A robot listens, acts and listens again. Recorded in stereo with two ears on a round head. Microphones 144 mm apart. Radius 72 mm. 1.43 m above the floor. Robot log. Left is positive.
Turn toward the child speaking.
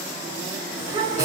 note: The child speaking: about 25° right or 155° right.
cmd yaw -25
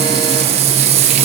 cmd idle
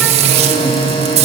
cmd idle
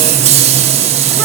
end: I heard a child speaking, but can't make it out now. It was about straight ahead or 130° right.